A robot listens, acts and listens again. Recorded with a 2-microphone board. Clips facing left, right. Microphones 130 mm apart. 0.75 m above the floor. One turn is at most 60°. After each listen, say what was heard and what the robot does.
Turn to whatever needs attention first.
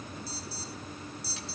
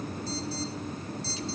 Turn 30° left.
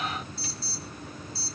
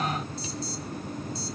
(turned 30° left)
So it is at 20° right. Turn 20° right.
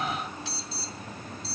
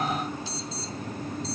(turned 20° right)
Found it: an alarm, straight ahead.